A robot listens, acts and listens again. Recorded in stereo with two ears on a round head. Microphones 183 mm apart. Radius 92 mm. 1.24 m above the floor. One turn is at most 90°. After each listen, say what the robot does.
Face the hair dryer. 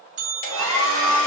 Turn 65° left.
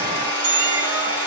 Turn 50° left.
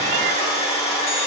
Turn 30° left.
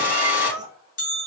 Turn 10° right.
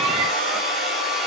Found it: a hair dryer, straight ahead, 1 to 2 m away.